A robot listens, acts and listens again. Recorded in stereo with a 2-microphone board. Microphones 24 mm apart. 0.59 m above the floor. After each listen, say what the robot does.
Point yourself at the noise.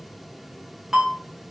Turn 20° right.
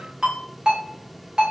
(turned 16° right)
Turn 145° right.
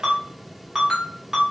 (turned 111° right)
Turn 30° right.
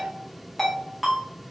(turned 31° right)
Facing the ringtone.